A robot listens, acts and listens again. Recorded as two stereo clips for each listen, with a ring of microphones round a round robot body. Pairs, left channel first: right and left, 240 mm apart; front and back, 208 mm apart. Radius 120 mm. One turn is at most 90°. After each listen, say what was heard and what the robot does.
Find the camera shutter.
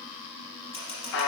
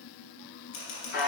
The camera shutter: 20° right. Turn 20° right.
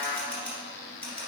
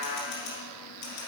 Found it: a camera shutter, straight ahead.